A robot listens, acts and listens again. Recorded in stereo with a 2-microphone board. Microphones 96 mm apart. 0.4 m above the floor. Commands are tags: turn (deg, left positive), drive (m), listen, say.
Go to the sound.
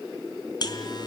<turn deg="45"/>
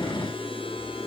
<listen/>
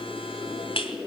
<turn deg="85"/>
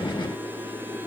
<listen/>
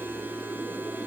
<listen/>
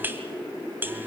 <turn deg="-20"/>
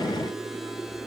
<listen/>
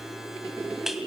<drive m="1.0"/>
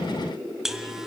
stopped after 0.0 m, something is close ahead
<say>Something is in my way. I am facing the buzzer but have not reached it.</say>